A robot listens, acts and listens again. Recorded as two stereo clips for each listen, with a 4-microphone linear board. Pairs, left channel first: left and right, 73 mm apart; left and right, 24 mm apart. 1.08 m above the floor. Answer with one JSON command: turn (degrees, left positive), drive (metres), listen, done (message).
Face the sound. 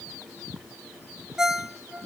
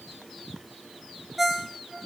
{"turn": -30}
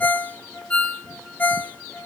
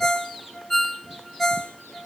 {"turn": 20}
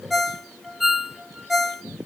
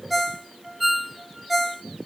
{"done": "Facing the ringtone, under 1 m away."}